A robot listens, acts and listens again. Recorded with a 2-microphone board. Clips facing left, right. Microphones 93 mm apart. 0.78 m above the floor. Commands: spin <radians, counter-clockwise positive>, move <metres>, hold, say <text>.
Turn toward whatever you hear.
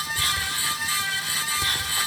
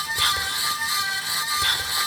spin -1.13
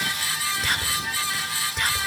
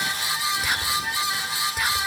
say Found it: whispering, straight ahead, 2 to 4 m away.